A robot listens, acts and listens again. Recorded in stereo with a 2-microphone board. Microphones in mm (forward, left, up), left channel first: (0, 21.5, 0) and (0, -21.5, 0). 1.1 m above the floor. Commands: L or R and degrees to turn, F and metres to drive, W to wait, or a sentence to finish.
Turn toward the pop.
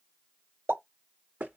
R90
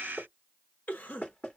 Facing where the pop came from. I can't hear it now.